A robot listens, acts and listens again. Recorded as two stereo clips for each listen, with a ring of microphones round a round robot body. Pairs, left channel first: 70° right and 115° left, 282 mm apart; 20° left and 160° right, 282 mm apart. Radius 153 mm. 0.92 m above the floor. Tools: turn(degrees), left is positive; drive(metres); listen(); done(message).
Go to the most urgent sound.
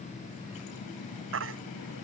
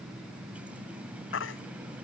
turn(degrees=70)
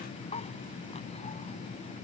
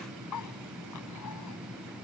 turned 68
listen()
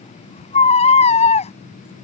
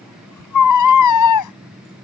drive(metres=1.0)
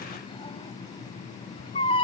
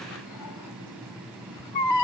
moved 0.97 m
drive(metres=1.0)
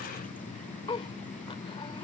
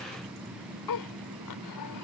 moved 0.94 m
listen()
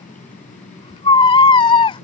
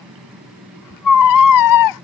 drive(metres=1.0)
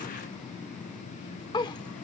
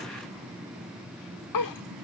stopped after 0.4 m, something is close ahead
done("I am next to the baby crying.")